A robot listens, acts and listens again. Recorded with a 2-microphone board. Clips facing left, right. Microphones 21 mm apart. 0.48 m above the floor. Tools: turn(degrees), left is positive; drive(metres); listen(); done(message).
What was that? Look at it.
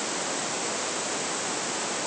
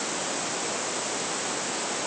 listen()
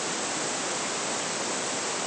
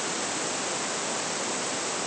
listen()
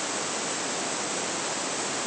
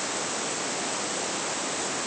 done("I can't make out anything.")